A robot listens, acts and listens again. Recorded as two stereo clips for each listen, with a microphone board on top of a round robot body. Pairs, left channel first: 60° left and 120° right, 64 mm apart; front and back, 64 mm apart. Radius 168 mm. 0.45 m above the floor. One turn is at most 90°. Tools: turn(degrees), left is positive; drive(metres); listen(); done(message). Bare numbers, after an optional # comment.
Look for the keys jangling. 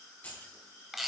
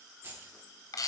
# The keys jangling: 125° left.
turn(90)
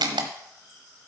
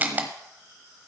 # Nothing new. It was at 35° left.
turn(35)
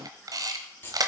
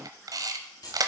done("Found it: keys jangling, straight ahead.")